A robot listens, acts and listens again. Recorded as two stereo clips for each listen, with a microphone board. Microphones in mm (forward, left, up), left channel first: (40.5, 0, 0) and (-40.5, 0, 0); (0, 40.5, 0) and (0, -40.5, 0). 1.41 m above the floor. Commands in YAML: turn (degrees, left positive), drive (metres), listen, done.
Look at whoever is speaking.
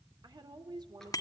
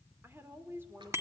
turn: -150
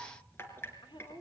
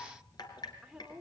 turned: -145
done: "Facing the woman speaking, 2 to 4 m away."